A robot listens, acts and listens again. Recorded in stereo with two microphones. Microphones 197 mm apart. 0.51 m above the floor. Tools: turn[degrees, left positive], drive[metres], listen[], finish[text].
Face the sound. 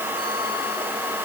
Action: listen[]
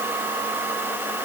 Action: listen[]
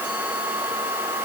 Action: finish[I can't make out anything to turn to.]